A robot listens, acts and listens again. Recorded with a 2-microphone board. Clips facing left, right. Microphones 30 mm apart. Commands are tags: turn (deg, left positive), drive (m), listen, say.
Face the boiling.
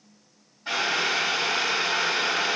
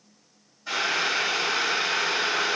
<turn deg="55"/>
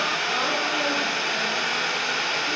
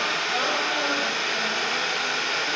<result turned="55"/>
<turn deg="65"/>
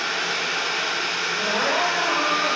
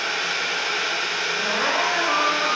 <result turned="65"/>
<say>Found it: boiling, straight ahead.</say>